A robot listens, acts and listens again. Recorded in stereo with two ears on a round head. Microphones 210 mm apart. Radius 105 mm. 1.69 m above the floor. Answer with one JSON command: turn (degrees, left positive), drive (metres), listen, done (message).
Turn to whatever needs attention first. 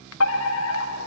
{"turn": 70}
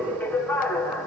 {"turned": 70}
{"turn": 10}
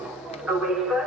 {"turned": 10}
{"done": "Found it: a fire alarm, straight ahead."}